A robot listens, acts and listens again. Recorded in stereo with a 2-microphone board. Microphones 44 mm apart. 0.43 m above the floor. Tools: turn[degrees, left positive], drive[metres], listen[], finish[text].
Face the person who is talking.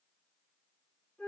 Action: listen[]
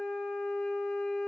Action: listen[]
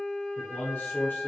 Thought: The man speaking: about 50° left or 130° left.
Action: turn[50]
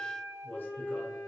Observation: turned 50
Thought: So it is at 65° left.
Action: turn[65]
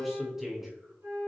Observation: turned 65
Thought: The man speaking is now 10° right.
Action: turn[-10]
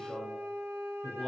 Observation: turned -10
Action: finish[Facing the man speaking, 1 to 2 m away.]